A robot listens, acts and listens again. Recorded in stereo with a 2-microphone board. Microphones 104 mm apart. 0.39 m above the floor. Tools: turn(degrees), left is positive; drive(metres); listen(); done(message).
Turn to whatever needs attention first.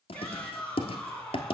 turn(degrees=30)
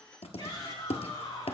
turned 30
turn(degrees=140)
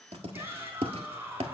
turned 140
turn(degrees=-20)
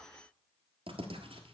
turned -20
listen()
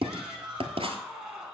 done("Found it: a shout, straight ahead, over 4 m away.")